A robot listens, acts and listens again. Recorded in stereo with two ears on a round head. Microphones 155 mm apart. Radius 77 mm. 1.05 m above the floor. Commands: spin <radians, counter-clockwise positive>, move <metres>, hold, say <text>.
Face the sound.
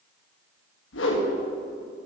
spin 1.57
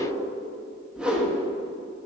say Found it: a whoosh, straight ahead, 1 to 2 m away.